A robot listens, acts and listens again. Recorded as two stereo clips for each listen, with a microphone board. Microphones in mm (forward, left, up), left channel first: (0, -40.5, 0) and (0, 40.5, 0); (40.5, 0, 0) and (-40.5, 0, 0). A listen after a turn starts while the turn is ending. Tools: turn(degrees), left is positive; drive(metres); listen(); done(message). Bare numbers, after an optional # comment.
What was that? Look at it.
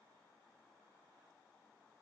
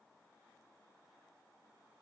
listen()
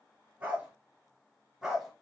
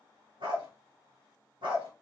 # The dog barking: 175° left.
turn(175)
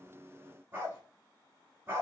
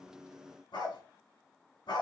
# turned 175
# The dog barking is now 25° left.
turn(25)
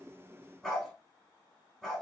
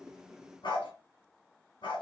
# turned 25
done("Facing the dog barking.")